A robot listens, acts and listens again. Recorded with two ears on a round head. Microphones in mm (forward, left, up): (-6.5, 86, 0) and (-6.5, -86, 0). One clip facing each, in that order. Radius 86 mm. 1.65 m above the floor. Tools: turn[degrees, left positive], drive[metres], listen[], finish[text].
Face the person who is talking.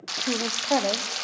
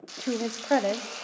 Action: turn[-30]
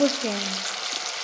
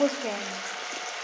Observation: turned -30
Thought: So it is at 20° left.
Action: turn[20]
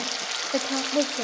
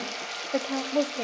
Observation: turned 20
Action: finish[Found it: a woman speaking, straight ahead, under 1 m away.]